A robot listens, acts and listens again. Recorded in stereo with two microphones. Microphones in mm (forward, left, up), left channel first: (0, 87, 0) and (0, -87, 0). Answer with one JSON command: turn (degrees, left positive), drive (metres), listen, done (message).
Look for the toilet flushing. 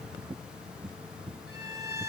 {"listen": true}
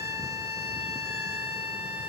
{"listen": true}
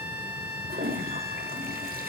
{"turn": -60}
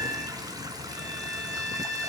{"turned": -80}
{"turn": -25}
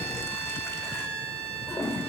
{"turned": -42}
{"turn": 15}
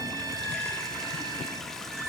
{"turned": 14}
{"done": "Found it: a toilet flushing, straight ahead."}